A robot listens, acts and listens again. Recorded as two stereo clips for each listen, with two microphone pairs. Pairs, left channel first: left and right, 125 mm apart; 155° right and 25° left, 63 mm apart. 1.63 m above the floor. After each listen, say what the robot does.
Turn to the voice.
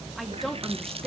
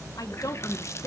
Turn 175° left.
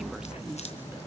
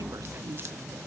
Keep listening.
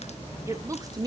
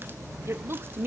Turn 30° right.
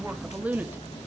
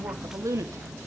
Turn 15° right.
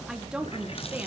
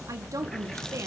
Turn 15° right.
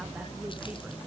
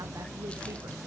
Keep listening.
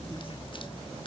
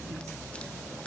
Keep listening.
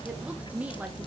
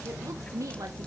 Turn 10° right.
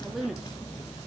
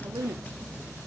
Found it: a woman speaking, straight ahead, 2 to 4 m away.